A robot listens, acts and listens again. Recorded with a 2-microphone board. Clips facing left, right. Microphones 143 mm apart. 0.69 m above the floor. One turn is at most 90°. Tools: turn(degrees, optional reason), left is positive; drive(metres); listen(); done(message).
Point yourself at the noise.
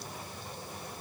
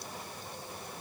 listen()
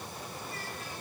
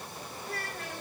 turn(degrees=-70, reason="The child speaking: about 70° right or 110° right.")
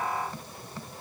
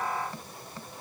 listen()
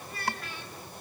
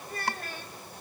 turn(degrees=-45, reason="So it is at 45° right.")
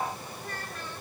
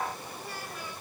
turn(degrees=-10, reason="The child speaking is now 10° right.")
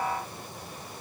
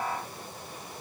listen()
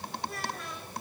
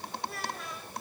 done("Facing the child speaking.")